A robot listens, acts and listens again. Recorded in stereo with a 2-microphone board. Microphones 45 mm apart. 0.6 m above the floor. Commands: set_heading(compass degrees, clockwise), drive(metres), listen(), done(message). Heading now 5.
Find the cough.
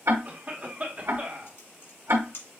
set_heading(40)
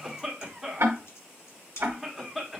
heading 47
done("Facing the cough.")